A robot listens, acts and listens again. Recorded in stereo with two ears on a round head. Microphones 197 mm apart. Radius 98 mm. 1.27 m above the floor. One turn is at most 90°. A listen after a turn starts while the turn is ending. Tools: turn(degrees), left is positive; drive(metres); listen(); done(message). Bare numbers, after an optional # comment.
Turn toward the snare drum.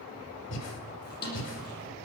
# The snare drum: about 45° left or 135° left.
turn(45)
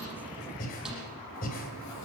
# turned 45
listen()
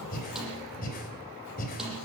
listen()
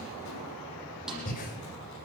done("Facing the snare drum.")